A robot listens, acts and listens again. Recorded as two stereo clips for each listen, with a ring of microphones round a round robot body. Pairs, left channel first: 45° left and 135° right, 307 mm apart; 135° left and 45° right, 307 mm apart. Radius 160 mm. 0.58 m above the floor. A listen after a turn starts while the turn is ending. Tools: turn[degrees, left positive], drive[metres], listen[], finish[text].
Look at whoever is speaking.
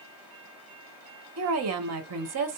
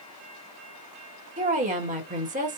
Thought: The woman speaking: 110° right.
Action: turn[-110]
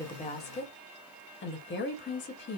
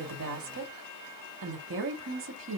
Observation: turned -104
Action: finish[Facing the woman speaking.]